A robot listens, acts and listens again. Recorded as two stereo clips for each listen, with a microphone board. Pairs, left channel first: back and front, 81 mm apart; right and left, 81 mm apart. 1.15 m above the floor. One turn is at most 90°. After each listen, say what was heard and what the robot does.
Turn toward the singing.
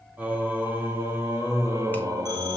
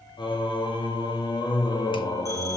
The singing: 45° right. Turn 45° right.
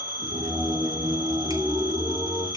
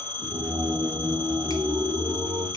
The singing is now 60° left. Turn 60° left.
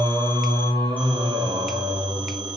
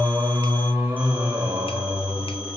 The singing is now 25° left. Turn 25° left.
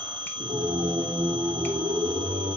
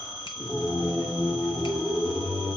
Found it: singing, straight ahead.